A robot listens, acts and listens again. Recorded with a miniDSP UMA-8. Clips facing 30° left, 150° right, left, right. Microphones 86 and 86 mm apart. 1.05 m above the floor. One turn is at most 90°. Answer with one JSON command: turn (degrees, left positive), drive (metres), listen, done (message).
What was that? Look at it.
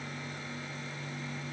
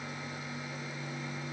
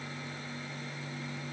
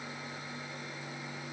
{"listen": true}
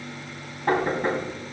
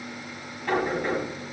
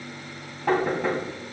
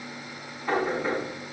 {"turn": 80}
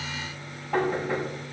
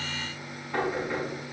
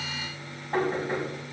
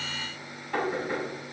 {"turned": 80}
{"turn": 35}
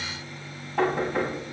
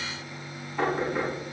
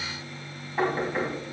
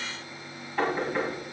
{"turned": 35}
{"turn": 15}
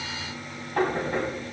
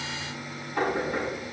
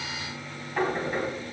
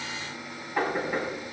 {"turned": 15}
{"done": "Found it: knocking, straight ahead, over 4 m away."}